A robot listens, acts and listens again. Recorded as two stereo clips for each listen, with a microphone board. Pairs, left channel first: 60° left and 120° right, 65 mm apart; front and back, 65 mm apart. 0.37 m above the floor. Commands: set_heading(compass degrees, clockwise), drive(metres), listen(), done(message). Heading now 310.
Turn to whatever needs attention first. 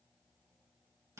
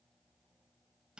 listen()
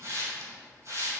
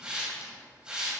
listen()
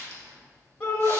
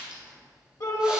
done("Facing the shout.")